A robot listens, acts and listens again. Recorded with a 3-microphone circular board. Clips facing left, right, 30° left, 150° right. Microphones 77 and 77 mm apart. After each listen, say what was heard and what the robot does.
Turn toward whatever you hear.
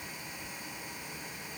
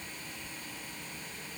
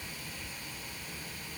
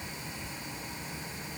Keep listening.
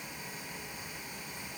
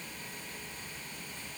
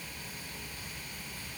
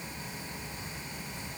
Keep listening.
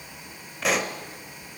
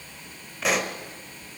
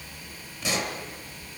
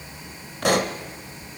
The pop: straight behind. Turn 180° left.
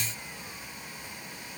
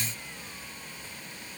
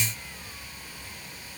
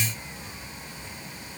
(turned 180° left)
I heard a pop from this way, but can't make it out now.